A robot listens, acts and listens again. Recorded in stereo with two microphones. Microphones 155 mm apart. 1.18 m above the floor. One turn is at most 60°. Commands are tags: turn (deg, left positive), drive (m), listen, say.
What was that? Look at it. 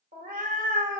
<turn deg="-60"/>
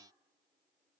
<listen/>
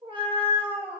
<turn deg="-40"/>
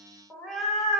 <say>Found it: a cat meowing, straight ahead, under 1 m away.</say>